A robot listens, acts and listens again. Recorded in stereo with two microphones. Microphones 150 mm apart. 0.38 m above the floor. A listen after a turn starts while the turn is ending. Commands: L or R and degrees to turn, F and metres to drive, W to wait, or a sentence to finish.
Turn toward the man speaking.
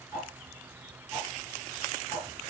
W
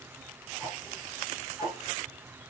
W
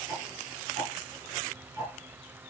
I can't make out a man speaking, only ticking.